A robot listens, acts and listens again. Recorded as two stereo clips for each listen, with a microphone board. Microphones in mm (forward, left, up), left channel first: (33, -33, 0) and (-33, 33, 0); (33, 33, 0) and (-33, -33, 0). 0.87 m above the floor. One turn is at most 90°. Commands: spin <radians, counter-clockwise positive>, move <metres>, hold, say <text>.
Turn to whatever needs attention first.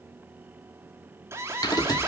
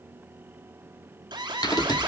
spin -1.57
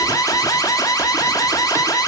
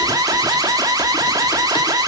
spin -1.57
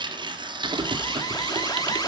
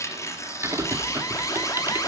say Found it: an alarm, straight ahead, 2 to 4 m away.